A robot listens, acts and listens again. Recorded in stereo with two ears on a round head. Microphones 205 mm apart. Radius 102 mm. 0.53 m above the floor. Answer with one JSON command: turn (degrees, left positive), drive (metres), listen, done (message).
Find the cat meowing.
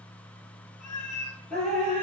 {"turn": 75}
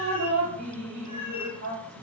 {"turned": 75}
{"listen": true}
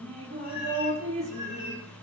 {"listen": true}
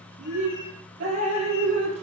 {"done": "I heard a cat meowing, but can't make it out now. It was about straight ahead or 30° left."}